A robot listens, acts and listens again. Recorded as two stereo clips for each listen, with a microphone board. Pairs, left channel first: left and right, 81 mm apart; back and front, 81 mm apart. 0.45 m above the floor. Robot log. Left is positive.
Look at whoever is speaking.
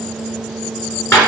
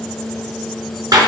cmd idle
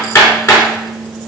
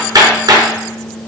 cmd idle
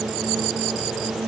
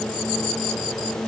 end: I can't make out anyone speaking to turn to.